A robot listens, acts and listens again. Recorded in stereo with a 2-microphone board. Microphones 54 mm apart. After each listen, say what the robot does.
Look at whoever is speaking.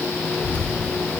Turn 30° left.
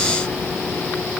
Found it: a child speaking, straight ahead, 2 to 4 m away.